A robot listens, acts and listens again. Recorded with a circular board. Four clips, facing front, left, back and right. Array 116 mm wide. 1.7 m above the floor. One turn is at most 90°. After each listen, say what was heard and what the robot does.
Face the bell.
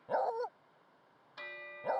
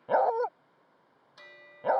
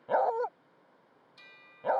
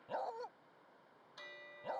The bell: 10° left. Turn 10° left.
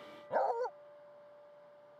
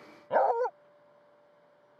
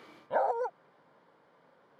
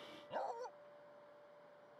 Facing the bell.